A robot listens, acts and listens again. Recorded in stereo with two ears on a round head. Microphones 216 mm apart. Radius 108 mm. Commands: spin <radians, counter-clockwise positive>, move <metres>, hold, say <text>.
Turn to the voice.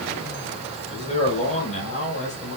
spin 0.52
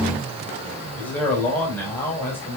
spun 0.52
spin 0.17
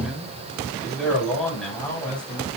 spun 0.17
say Facing the man speaking.